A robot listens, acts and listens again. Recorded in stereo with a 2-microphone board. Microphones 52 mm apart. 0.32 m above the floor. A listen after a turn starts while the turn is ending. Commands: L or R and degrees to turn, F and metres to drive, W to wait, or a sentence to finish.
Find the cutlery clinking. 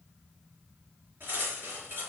R45
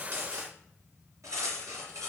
R90
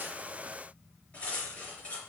L25
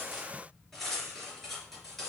Facing the cutlery clinking, 2 to 4 m away.